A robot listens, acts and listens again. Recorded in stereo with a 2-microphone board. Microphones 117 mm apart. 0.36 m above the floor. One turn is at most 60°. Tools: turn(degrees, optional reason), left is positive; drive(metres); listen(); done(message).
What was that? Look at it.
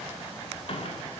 listen()
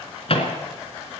turn(degrees=55, reason="The microwave: about 55° left or 125° left.")
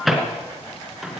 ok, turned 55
done("Found it: a microwave, straight ahead.")